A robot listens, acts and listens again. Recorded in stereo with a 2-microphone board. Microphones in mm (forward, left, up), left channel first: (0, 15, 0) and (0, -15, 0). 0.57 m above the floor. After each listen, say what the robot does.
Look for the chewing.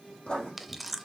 Turn 30° left.
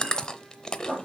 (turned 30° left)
Turn 155° left.
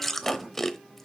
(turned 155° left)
Turn 10° left.
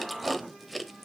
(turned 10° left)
Found it: chewing, straight ahead.